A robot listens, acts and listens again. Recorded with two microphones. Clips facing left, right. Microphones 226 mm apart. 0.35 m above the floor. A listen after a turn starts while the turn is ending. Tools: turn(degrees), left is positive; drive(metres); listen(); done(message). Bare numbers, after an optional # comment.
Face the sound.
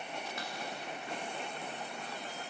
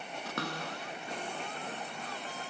turn(-90)
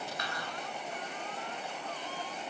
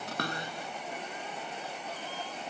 listen()
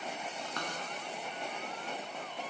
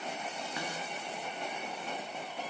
# The cupboard door is now 10° right.
turn(-10)
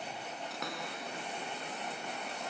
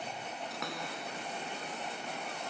done("Found it: a cupboard door, straight ahead.")